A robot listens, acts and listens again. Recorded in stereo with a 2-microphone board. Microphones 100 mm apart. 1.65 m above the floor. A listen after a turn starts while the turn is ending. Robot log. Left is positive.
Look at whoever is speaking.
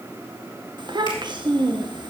note: The child speaking: about 50° right or 130° right.
cmd yaw -50
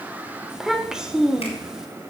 end: Found it: a child speaking, straight ahead, 1 to 2 m away.